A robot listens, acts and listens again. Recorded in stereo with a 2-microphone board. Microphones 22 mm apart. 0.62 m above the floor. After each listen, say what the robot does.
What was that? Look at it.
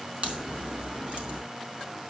Turn 50° right.
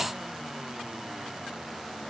Keep listening.
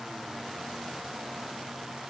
I heard a crack, but can't make it out now. It was about straight ahead or 80° right.